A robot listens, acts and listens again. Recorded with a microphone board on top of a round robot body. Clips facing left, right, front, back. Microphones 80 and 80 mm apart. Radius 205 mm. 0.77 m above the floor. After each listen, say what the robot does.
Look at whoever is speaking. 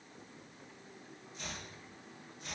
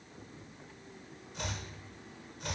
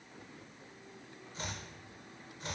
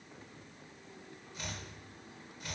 Keep listening.
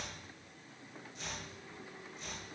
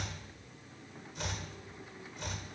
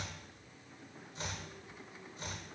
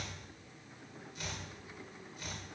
Keep listening.
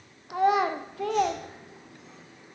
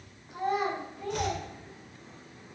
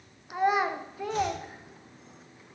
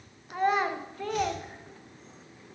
Turn 85° left.
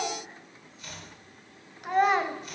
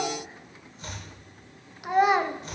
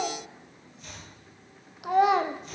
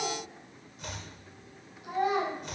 Facing the child speaking, under 1 m away.